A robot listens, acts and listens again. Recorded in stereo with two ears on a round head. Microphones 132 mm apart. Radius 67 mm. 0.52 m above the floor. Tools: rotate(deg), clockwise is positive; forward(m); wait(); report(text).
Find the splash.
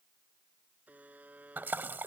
rotate(30)
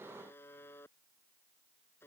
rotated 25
wait()
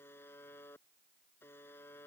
report("I heard a splash, but can't make it out now. It was about 10° left or 140° right.")